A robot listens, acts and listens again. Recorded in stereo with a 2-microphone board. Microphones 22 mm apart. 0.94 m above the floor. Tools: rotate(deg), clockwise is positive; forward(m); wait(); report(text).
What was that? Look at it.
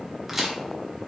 rotate(30)
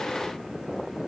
wait()
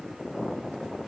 report("I heard a crack, but can't make it out now. It was about 15° left or 135° right.")